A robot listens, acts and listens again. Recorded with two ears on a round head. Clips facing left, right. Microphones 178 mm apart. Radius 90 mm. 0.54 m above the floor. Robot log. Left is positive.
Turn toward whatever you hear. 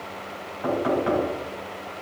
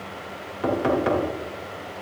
note: The knocking: about 70° right or 110° right.
cmd yaw -70
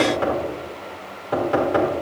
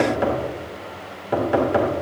note: So it is at 20° right.
cmd yaw -20
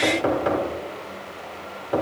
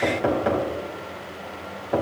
end: Facing the knocking.